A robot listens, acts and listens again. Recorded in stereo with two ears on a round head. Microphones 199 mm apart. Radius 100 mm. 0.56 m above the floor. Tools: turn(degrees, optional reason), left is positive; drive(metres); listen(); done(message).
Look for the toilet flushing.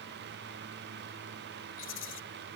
listen()
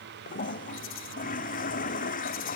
turn(degrees=40, reason="The toilet flushing: about 40° left or 140° left.")
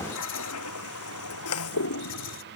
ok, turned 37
turn(degrees=105, reason="So it is at 105° left.")
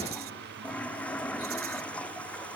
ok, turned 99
done("Facing the toilet flushing.")